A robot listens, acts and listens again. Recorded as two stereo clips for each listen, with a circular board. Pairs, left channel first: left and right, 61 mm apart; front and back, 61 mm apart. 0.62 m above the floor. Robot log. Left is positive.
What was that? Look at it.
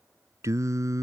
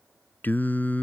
note: The singing: 65° right.
cmd yaw -65
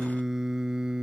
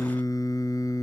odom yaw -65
note: The singing is now 15° right.
cmd yaw -15
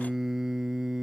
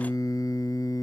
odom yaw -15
note: The singing is now 10° right.
cmd yaw -10
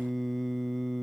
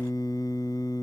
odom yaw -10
end: Found it: singing, straight ahead.